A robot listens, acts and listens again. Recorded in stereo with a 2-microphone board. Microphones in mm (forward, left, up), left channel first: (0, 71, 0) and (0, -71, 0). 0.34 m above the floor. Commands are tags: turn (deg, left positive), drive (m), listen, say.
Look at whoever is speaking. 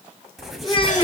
<turn deg="40"/>
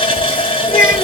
<turn deg="100"/>
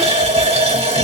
<listen/>
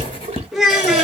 <say>Facing the child speaking.</say>